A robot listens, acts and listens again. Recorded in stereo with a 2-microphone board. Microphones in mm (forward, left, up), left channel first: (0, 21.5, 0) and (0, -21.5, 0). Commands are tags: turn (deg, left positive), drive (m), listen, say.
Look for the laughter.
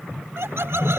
<turn deg="-70"/>
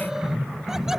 <listen/>
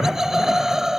<turn deg="-10"/>
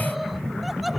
<say>Found it: laughter, straight ahead.</say>